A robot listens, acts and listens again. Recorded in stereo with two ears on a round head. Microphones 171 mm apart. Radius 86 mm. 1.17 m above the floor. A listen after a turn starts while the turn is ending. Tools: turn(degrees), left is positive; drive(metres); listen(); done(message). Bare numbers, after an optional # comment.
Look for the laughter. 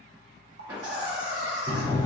# The laughter: about 25° right or 155° right.
turn(-25)
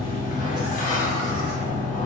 listen()
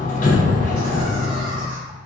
listen()
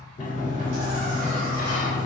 done("I heard laughter, but can't make it out now. It was about straight ahead or 130° right.")